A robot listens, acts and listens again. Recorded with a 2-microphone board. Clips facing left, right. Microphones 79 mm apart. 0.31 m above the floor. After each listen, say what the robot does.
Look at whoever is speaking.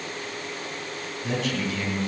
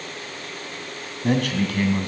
Turn 65° right.
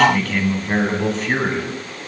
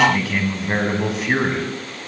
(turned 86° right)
Found it: a man speaking, straight ahead, 2 to 4 m away.